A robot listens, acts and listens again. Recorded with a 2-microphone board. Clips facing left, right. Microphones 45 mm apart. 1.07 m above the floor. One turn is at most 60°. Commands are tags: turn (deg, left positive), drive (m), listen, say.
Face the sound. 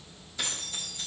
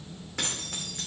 <turn deg="-60"/>
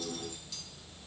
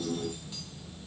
<turn deg="-30"/>
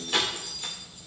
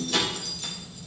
<turn deg="20"/>
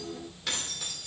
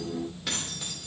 <say>Facing the keys jangling, 2 to 4 m away.</say>